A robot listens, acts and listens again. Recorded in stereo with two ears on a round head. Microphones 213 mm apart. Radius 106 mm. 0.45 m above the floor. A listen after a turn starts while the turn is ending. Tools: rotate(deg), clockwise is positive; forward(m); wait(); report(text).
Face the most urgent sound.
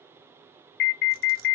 rotate(-50)
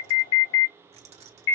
rotate(-65)
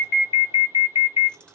rotate(-30)
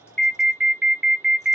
report("Facing the alarm.")